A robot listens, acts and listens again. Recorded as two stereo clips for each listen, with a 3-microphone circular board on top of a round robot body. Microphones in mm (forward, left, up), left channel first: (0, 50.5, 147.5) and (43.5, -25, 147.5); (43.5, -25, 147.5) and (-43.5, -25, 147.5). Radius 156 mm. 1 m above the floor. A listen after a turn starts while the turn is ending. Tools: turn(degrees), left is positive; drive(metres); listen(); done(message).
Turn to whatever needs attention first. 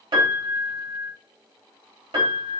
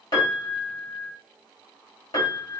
listen()
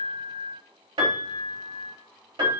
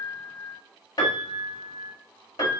listen()
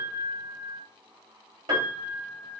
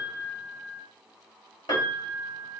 done("I can't make out anything urgent, only a piano.")